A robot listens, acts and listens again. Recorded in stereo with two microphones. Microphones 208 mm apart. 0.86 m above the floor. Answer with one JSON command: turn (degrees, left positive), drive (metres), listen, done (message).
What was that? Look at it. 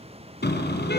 {"turn": 55}
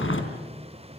{"turn": 75}
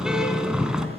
{"done": "Found it: a car horn, straight ahead, 2 to 4 m away."}